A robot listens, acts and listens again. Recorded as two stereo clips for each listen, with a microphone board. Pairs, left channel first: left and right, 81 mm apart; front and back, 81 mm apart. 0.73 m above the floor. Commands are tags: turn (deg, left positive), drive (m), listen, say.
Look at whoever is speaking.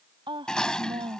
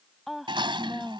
<turn deg="-95"/>
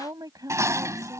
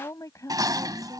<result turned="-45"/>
<turn deg="-50"/>
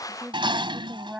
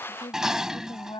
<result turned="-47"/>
<turn deg="-15"/>
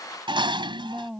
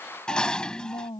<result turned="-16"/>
<say>Found it: a woman speaking, straight ahead.</say>